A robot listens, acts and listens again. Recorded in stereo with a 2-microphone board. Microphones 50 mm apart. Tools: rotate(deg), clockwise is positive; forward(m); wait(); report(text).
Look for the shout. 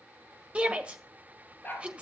rotate(25)
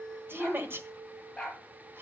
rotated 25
rotate(130)
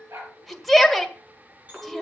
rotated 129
report("Facing the shout, 1 to 2 m away.")